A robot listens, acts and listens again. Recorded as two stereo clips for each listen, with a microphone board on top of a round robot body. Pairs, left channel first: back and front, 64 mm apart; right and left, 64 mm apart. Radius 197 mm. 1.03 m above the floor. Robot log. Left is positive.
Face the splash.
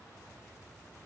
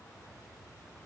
cmd idle
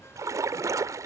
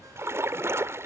note: The splash: 40° left.
cmd yaw +40
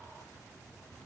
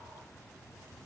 end: Facing where the splash came from. I can't hear it now.